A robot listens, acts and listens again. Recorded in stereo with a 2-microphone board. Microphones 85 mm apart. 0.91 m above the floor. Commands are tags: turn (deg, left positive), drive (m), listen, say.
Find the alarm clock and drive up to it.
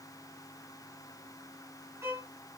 <listen/>
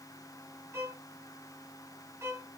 <listen/>
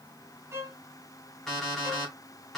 <turn deg="30"/>
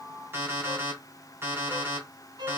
<turn deg="-25"/>
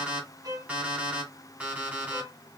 <turn deg="-15"/>
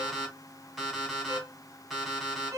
<drive m="1.0"/>
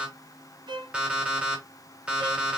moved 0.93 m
<turn deg="-15"/>
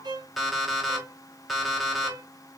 <drive m="1.0"/>
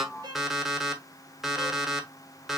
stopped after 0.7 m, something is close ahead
<say>I am next to the alarm clock.</say>